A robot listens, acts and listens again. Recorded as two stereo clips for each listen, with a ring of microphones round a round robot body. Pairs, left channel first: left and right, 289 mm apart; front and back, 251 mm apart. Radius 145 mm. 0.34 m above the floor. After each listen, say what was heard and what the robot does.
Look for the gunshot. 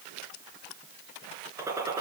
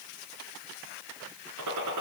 The gunshot: 170° right. Turn 170° right.
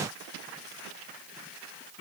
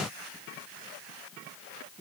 I heard a gunshot from this way, but can't make it out now.